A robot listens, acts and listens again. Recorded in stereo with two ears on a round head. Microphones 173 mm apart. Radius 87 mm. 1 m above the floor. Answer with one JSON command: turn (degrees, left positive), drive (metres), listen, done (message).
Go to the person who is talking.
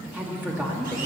{"turn": -30}
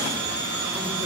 {"listen": true}
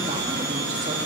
{"listen": true}
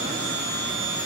{"done": "I heard a woman speaking, but can't make it out now. It was about 20° left or 140° right. I did not reach it."}